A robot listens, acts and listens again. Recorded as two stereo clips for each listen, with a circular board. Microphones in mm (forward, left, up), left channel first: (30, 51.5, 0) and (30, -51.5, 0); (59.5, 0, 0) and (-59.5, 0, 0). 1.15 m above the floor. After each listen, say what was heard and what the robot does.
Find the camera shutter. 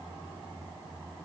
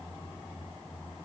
Keep listening.
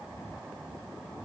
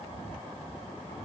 Keep listening.
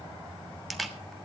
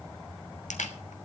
Facing the camera shutter, 1 to 2 m away.